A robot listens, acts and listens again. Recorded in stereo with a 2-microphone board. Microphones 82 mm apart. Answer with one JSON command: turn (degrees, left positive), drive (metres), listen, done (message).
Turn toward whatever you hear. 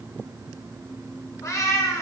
{"turn": 35}
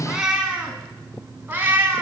{"turn": -25}
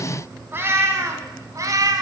{"turn": -45}
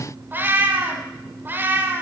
{"turn": -25}
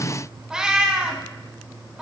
{"done": "Facing the cat meowing."}